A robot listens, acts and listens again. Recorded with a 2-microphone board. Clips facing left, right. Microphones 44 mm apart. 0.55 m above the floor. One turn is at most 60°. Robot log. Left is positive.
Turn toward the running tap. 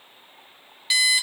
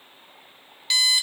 cmd idle
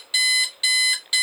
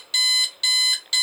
cmd idle
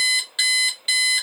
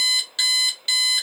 end: I can't make out a running tap to turn to.